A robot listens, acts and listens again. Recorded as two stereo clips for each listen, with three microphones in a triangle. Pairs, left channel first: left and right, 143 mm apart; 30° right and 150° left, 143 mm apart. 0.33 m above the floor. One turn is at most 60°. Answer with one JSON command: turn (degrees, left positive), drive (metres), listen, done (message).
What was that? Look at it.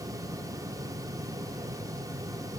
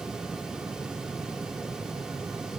{"listen": true}
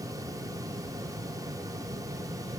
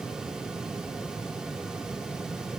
{"listen": true}
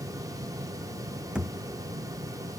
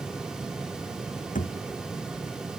{"done": "Found it: a thud, straight ahead."}